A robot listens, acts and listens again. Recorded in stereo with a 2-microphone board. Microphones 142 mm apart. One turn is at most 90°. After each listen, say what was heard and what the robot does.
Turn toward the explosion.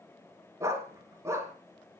Keep listening.
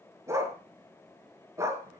Keep listening.
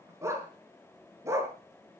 I can't make out an explosion to turn to.